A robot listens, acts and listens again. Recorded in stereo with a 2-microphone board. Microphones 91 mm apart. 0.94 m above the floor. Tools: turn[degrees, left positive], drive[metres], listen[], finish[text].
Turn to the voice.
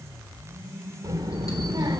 Thought: The child speaking: about 50° right or 130° right.
Action: turn[-50]
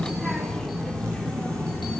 Thought: So it is at 15° left.
Action: turn[15]
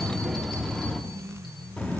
Thought: The child speaking is now 15° left.
Action: turn[15]
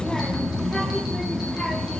Action: finish[Facing the child speaking, 1 to 2 m away.]